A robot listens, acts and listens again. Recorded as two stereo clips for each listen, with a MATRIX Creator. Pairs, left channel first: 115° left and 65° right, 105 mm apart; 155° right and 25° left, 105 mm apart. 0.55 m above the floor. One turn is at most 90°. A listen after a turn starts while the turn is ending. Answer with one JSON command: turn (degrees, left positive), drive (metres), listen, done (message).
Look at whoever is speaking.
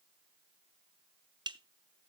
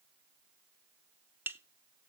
{"listen": true}
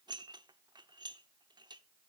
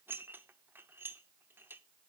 {"listen": true}
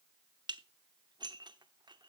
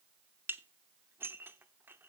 {"done": "I can't make out anyone speaking, only dishes clattering."}